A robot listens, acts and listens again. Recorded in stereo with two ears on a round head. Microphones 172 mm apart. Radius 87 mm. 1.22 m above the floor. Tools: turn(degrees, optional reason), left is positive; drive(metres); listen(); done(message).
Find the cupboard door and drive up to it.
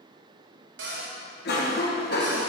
turn(degrees=-65, reason="The cupboard door: about 65° right or 115° right.")
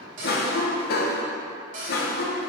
turn(degrees=-45, reason="So it is at 45° right.")
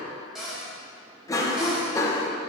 drive(metres=1.0)
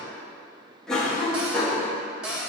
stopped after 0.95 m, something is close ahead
done("Arrived at the cupboard door, straight ahead.")